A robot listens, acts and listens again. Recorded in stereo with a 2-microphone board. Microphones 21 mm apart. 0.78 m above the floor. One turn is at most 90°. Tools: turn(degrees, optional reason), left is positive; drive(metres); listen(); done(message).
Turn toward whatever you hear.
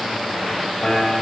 turn(degrees=40, reason="The piano: about 40° left or 140° left.")
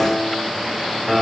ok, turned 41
done("Found it: a piano, straight ahead.")